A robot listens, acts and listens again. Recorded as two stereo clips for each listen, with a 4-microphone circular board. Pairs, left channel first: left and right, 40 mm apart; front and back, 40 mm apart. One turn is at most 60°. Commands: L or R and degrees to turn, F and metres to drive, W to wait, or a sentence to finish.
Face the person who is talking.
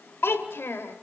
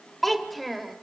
L60
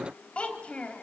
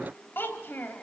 L35
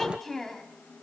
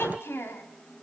L10
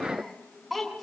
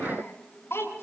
Facing the child speaking.